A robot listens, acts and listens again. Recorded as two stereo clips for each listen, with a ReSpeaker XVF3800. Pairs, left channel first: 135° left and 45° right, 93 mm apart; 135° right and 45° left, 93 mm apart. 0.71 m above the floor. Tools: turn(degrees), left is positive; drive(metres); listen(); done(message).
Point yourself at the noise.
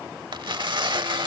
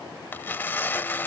turn(degrees=-70)
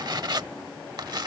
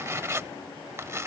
turn(degrees=-10)
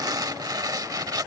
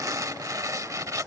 done("Found it: tearing paper, straight ahead.")